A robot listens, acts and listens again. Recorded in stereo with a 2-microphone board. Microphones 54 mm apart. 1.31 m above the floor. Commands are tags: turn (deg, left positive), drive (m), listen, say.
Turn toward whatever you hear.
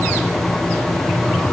<listen/>
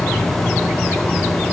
<listen/>
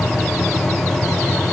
<say>I can't make out anything to turn to.</say>